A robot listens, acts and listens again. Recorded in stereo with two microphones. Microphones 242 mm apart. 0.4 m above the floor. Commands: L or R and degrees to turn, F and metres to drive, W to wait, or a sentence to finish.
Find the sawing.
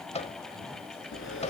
L55
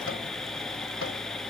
Facing the sawing.